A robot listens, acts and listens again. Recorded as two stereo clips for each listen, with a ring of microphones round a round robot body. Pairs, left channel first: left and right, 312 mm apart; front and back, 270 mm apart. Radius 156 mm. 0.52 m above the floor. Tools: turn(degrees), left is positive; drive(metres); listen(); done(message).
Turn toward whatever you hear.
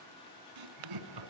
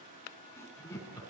turn(degrees=-80)
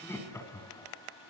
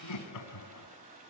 turn(degrees=10)
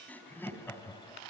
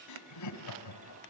turn(degrees=10)
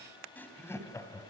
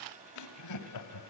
turn(degrees=10)
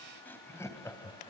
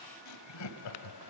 turn(degrees=10)
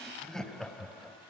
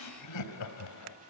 done("Facing the laughter, 2 to 4 m away.")